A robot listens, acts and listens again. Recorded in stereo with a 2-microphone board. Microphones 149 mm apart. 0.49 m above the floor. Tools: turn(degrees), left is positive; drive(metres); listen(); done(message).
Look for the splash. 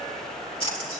turn(degrees=35)
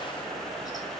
listen()
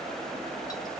done("I heard a splash, but can't make it out now. It was about straight ahead or 110° left.")